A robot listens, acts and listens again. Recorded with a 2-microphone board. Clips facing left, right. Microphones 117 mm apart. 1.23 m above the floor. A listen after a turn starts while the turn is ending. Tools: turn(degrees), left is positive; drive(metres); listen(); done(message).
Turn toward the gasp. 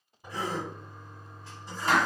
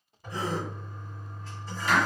turn(degrees=-35)
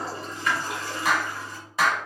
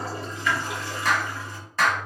listen()
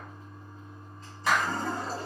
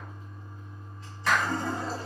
done("I heard a gasp, but can't make it out now. It was about straight ahead or 110° right.")